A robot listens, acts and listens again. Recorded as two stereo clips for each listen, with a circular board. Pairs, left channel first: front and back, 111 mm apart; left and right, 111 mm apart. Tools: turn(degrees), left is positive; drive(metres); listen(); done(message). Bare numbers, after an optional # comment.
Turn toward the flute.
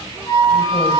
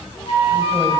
# The flute: 55° left.
turn(55)
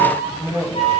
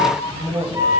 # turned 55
# The flute is now 25° right.
turn(-25)
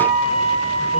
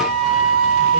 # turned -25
done("Facing the flute.")